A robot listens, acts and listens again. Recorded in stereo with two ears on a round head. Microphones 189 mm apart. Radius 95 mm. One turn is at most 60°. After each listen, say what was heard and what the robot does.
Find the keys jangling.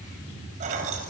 The keys jangling: about 35° right or 145° right. Turn 35° right.
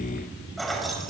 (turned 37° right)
Found it: keys jangling, straight ahead.